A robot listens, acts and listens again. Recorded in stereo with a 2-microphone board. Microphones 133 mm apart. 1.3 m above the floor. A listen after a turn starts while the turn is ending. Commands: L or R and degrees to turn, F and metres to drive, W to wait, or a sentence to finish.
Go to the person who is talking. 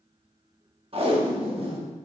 W
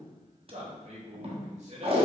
R55
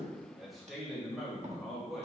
F1.0
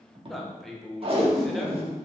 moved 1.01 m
F1.0
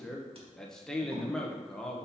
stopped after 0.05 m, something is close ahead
Arrived at the man speaking, straight ahead.